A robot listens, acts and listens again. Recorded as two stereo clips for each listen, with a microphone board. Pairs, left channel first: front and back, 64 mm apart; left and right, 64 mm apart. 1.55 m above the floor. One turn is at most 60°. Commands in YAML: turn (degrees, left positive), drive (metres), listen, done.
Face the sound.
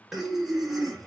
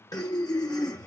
turn: 60
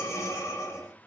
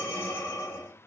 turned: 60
turn: 40
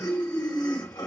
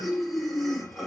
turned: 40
done: "Facing the breathing, under 1 m away."